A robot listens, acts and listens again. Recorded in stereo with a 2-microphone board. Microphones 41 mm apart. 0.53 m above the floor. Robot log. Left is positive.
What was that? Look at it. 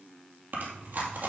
note: The chewing: about 60° right or 120° right.
cmd yaw -60
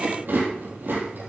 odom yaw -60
note: So it is at 60° right.
cmd yaw -60
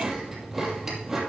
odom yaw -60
end: Found it: chewing, straight ahead, 2 to 4 m away.